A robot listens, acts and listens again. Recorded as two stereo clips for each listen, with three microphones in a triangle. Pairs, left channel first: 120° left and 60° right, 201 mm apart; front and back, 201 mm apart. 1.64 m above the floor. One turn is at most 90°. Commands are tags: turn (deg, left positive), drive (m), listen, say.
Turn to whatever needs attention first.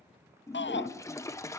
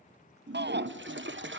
<turn deg="90"/>
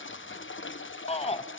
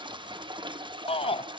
<turn deg="65"/>
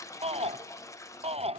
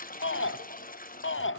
<say>Found it: a shout, straight ahead, under 1 m away.</say>